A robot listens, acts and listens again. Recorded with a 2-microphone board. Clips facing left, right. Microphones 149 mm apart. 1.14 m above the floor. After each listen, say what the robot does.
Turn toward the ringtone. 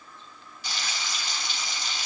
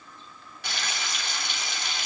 Keep listening.
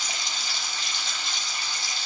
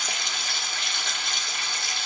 Keep listening.
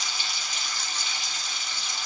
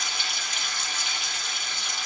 I can't make out a ringtone to turn to.